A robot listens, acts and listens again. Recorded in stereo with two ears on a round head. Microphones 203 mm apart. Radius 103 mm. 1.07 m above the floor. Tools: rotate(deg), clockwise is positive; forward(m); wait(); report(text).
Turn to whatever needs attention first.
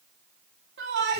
rotate(45)
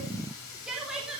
report("Facing the shout, 2 to 4 m away.")